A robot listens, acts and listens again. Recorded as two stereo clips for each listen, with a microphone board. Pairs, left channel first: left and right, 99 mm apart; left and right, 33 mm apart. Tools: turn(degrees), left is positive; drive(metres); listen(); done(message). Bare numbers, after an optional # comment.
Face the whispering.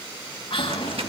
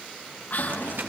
# The whispering: about 65° left or 115° left.
turn(65)
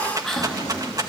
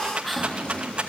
done("Facing the whispering, 2 to 4 m away.")